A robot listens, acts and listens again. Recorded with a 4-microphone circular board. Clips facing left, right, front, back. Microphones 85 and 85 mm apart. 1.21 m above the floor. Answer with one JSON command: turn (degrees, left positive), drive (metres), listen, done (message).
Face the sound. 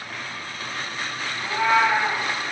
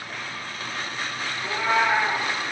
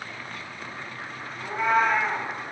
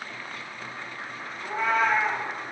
{"turn": 70}
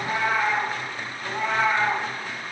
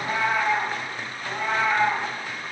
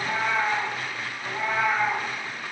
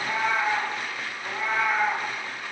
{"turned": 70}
{"turn": 50}
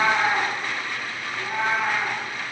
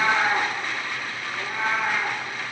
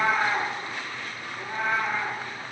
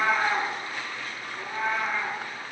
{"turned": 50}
{"turn": 25}
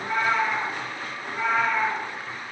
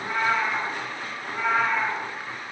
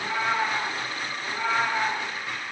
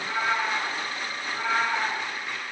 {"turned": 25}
{"turn": -10}
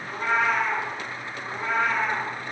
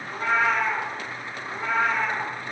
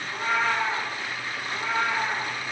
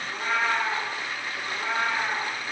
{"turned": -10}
{"done": "Facing the cat meowing, 2 to 4 m away."}